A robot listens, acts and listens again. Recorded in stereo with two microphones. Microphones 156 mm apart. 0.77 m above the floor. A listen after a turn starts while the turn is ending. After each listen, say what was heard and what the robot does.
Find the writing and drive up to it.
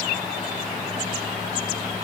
Keep listening.
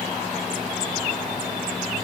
Keep listening.
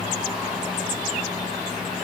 I can't make out writing.